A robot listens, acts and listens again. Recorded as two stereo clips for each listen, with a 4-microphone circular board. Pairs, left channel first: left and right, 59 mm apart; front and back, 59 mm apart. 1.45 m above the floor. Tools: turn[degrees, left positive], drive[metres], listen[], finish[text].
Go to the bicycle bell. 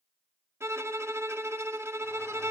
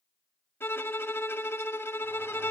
Action: listen[]
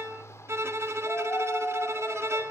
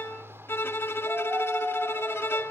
Action: listen[]
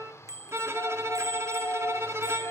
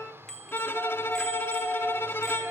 Thought: The bicycle bell: 80° right.
Action: turn[-80]
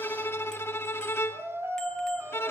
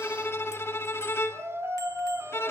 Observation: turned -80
Action: listen[]
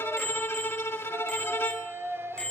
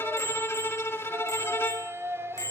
Thought: The bicycle bell is now 15° left.
Action: turn[15]
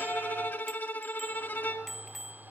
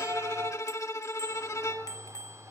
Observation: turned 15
Action: drive[1.0]
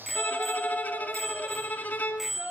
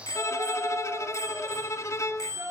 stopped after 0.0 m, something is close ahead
Action: finish[Blocked. The bicycle bell is further on, straight ahead.]